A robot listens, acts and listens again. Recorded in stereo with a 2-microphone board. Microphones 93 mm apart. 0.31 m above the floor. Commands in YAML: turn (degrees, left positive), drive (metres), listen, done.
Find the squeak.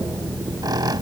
turn: -50
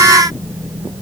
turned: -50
listen: true
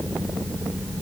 listen: true
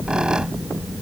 turn: -10
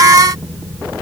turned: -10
listen: true
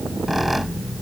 done: "Found it: a squeak, straight ahead."